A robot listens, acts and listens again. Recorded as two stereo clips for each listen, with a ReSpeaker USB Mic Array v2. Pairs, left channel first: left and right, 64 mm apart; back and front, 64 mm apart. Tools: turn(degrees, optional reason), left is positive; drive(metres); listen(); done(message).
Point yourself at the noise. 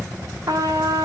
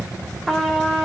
turn(degrees=-95, reason="The trumpet: 95° right.")
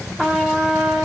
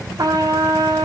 done("Facing the trumpet, 2 to 4 m away.")